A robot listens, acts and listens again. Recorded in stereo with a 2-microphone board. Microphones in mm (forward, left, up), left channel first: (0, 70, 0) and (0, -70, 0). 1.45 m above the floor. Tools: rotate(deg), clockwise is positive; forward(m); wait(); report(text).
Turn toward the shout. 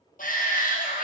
rotate(-75)
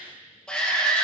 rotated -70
report("Found it: a shout, straight ahead, 1 to 2 m away.")